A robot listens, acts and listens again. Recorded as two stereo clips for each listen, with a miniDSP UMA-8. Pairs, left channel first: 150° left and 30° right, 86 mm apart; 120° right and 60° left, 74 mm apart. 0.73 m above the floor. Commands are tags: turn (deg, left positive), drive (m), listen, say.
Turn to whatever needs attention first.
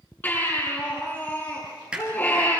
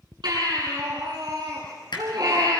<turn deg="85"/>
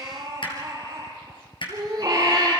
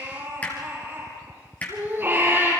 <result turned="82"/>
<say>Found it: a baby crying, straight ahead.</say>